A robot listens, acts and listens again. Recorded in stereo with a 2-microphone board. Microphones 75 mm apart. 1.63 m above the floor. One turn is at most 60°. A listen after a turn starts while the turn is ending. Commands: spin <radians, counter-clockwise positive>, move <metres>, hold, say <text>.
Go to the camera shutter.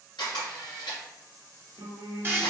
spin 1.05
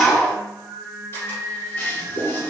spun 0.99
spin 0.61
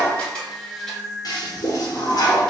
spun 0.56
hold
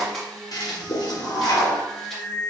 move 1.0
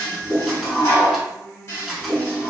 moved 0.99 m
move 1.0
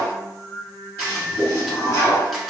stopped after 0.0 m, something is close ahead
hold
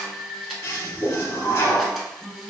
say I am next to the camera shutter.